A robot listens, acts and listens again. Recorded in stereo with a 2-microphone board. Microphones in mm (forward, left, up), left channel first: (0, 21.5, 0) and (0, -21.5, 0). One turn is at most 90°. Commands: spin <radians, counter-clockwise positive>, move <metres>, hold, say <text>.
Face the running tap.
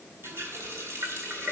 spin -1.57
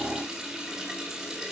spin -0.17
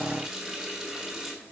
say Facing the running tap, 2 to 4 m away.